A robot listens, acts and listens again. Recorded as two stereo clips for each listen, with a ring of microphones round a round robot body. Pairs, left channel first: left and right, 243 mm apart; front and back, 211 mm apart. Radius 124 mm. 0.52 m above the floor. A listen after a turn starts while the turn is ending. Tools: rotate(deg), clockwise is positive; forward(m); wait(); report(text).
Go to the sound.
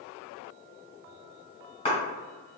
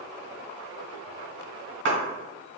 rotate(-160)
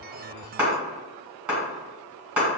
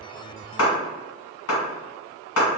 forward(1.0)
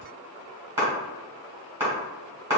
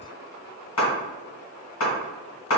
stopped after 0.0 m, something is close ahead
rotate(10)
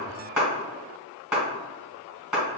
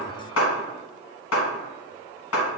report("Blocked. The clap is further on, straight ahead.")